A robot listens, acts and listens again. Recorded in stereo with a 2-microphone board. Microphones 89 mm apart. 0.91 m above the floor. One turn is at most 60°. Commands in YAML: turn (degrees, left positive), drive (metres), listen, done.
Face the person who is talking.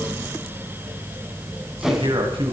turn: -60
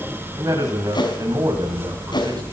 turn: -45
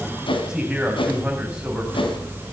turn: -10
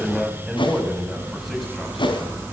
done: "Facing the man speaking."